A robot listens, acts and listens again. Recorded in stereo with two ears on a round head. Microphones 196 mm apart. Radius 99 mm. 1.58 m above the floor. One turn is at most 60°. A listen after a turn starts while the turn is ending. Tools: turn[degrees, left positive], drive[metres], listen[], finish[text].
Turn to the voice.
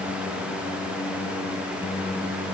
Action: listen[]
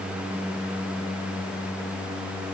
Action: listen[]
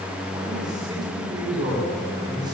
Thought: The man speaking: about 20° right or 160° right.
Action: turn[-20]
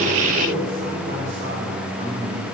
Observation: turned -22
Thought: So it is at 135° right.
Action: turn[-60]
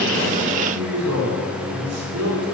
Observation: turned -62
Thought: The man speaking is now 75° right.
Action: turn[-60]
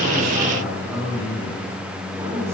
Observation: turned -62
Thought: The man speaking is now 10° right.
Action: turn[-10]
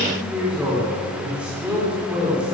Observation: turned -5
Action: finish[Found it: a man speaking, straight ahead, over 4 m away.]